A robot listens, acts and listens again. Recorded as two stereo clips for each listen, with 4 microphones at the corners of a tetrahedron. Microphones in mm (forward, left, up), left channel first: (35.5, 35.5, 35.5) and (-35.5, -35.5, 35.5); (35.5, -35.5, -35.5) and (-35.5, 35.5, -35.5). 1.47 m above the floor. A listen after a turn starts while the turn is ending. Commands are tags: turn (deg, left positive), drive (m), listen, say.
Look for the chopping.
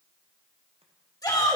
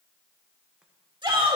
<listen/>
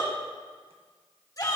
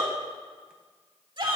<listen/>
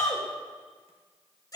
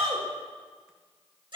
<say>I can't make out chopping, only a shout.</say>